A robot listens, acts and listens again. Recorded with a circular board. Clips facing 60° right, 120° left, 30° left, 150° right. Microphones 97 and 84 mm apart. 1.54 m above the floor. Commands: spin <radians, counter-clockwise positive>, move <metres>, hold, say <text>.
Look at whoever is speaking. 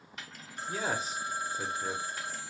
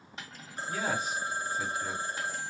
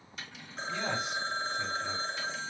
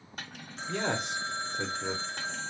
spin -2.09
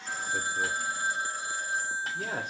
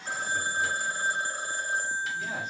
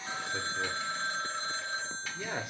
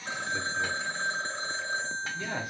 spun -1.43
spin -0.61
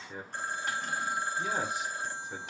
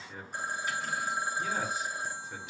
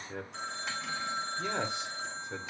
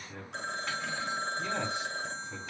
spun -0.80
spin 0.17
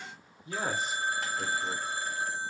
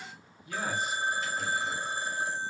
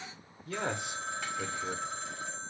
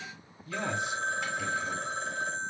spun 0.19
say Found it: a man speaking, straight ahead, under 1 m away.